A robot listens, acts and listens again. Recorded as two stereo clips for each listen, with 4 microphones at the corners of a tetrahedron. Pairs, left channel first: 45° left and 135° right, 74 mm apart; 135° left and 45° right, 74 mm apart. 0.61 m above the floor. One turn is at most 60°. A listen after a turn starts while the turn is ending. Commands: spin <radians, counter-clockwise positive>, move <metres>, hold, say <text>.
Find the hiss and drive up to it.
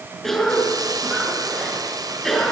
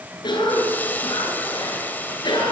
spin -1.05
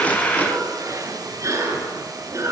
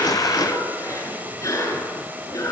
spin -1.05
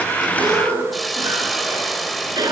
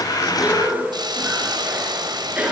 spin -0.79
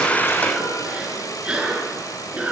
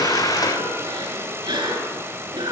hold
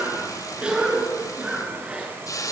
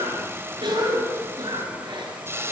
spin 0.17
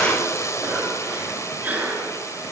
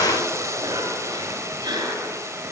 move 1.0
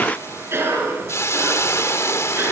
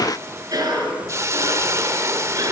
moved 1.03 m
move 1.0
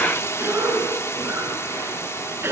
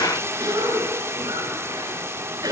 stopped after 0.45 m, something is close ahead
say I am next to the hiss.